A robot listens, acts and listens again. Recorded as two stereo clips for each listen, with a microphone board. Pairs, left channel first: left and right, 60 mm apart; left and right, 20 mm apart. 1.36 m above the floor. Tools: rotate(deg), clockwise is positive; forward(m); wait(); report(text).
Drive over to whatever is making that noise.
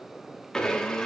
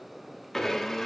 rotate(-30)
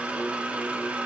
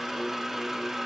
rotate(20)
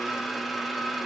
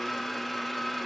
forward(1.0)
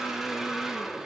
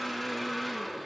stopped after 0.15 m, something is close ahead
report("Something is in my way. I am facing the blender but have not reached it.")